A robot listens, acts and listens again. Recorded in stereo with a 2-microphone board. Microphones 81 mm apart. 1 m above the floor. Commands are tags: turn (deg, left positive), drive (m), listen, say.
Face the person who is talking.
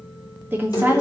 <turn deg="-25"/>
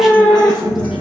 <listen/>
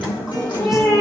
<listen/>
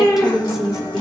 <say>Found it: a woman speaking, straight ahead, 1 to 2 m away.</say>